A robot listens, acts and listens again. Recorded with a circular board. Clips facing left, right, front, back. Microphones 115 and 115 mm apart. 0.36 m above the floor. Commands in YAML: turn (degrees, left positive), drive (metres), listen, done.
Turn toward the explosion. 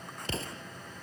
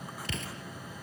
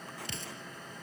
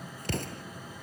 turn: 145
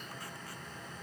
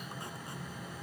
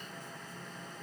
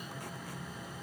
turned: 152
done: "I heard an explosion from this way, but can't make it out now."